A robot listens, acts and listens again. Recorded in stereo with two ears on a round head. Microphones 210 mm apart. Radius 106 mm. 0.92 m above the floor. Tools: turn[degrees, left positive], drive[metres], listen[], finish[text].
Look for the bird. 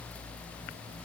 Action: listen[]
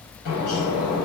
Thought: The bird: about 70° left or 110° left.
Action: turn[70]
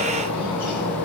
Thought: So it is at 35° left.
Action: turn[35]
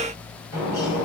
Thought: The bird is now 15° left.
Action: turn[15]
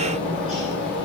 Action: finish[Found it: a bird, straight ahead.]